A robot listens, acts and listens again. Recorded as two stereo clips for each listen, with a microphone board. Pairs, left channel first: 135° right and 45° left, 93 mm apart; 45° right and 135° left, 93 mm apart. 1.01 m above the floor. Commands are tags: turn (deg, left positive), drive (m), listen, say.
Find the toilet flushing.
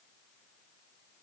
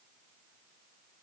<listen/>
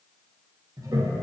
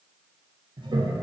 <turn deg="95"/>
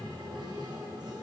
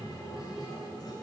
<say>Found it: a toilet flushing, straight ahead, under 1 m away.</say>